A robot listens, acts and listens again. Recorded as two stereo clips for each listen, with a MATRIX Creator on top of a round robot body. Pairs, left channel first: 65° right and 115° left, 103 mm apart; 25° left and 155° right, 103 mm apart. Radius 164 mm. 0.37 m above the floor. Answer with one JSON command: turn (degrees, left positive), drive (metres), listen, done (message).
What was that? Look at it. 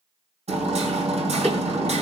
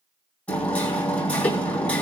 {"turn": 100}
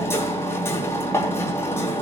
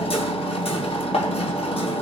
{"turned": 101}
{"done": "Found it: hammering, straight ahead."}